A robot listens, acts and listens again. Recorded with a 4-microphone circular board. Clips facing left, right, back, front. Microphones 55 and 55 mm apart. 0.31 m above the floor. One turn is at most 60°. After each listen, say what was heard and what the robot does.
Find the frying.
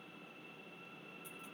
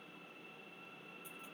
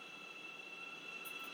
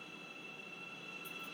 Keep listening.
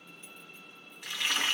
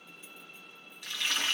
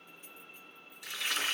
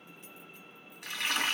The frying: 30° left. Turn 30° left.
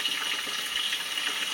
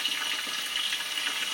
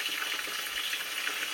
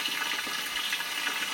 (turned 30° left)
Facing the frying.